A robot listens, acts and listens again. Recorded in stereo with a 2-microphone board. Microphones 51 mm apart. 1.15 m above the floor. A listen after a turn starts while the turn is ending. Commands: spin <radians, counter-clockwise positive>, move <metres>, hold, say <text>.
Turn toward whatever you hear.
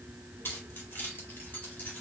spin 0.70
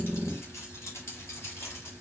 spin 2.09
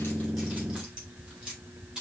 spin -0.26
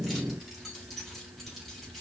say Found it: keys jangling, straight ahead, 2 to 4 m away.